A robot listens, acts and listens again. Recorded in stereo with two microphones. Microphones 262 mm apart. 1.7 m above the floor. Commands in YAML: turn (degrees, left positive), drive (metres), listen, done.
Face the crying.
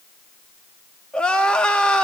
turn: 30
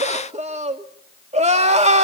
turn: -25
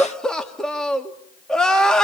done: "Found it: crying, straight ahead, 2 to 4 m away."